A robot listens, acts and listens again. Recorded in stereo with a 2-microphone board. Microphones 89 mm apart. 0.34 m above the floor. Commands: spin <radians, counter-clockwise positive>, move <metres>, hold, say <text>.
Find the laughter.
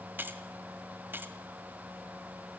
hold
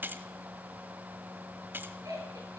spin -0.70
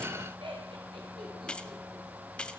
spin -1.92
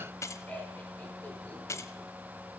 spin 0.26
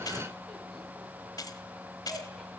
say Found it: laughter, straight ahead, over 4 m away.